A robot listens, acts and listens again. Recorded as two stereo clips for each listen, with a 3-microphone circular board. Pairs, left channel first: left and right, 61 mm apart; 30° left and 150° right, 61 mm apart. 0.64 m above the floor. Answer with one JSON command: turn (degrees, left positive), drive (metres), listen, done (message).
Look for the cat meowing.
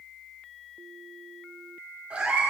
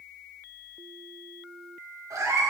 {"turn": -165}
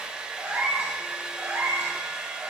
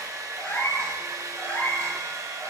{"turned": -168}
{"turn": -35}
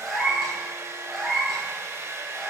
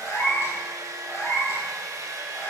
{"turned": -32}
{"done": "Facing the cat meowing, 2 to 4 m away."}